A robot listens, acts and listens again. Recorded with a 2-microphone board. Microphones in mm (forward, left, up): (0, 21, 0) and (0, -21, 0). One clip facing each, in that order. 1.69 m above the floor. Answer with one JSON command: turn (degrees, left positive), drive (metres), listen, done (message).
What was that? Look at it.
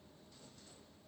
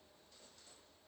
{"listen": true}
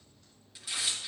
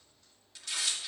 {"turn": 30}
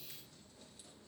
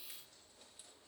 {"listen": true}
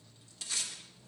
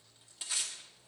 {"turn": -20}
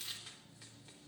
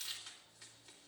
{"done": "Found it: tearing paper, straight ahead."}